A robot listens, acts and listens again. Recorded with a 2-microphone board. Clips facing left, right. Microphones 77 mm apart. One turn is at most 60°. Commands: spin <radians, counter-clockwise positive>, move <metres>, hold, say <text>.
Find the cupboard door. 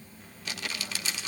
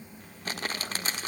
hold
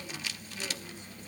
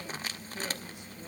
hold
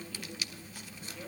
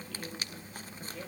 say I can't make out a cupboard door to turn to.